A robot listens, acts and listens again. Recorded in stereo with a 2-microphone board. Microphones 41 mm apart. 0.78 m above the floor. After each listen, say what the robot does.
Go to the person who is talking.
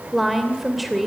Turn 30° right.
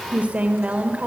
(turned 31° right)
Turn 145° right.
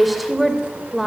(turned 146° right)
Drive 1.0 m forward.
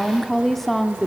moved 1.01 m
Turn 10° left.
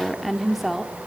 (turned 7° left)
Drive 1.0 m forward.
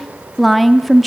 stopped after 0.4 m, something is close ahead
Arrived at the woman speaking, straight ahead.